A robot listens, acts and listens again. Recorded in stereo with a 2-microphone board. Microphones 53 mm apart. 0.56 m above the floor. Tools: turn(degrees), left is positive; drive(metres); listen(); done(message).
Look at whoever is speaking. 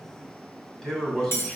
turn(degrees=30)
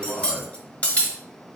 turn(degrees=140)
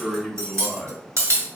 done("Found it: a man speaking, straight ahead.")